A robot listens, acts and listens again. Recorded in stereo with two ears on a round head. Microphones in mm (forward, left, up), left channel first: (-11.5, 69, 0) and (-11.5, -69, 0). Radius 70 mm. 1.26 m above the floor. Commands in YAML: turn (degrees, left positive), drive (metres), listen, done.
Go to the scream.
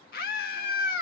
turn: 60
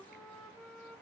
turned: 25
listen: true
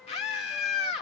turn: 35
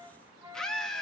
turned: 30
drive: 1.0
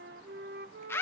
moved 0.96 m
turn: 15
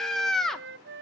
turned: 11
drive: 1.0
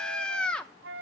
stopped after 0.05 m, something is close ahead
done: "I am next to the scream."